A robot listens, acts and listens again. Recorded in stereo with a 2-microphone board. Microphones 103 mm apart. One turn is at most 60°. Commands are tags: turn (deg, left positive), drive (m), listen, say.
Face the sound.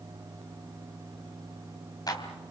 <turn deg="40"/>
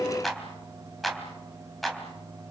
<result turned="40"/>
<say>Found it: a clap, straight ahead.</say>